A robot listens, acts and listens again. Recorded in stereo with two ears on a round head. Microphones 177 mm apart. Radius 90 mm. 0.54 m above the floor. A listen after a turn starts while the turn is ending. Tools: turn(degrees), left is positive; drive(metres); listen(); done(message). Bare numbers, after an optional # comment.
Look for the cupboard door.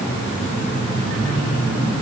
listen()
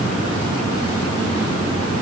listen()
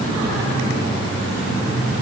done("I can't make out a cupboard door.")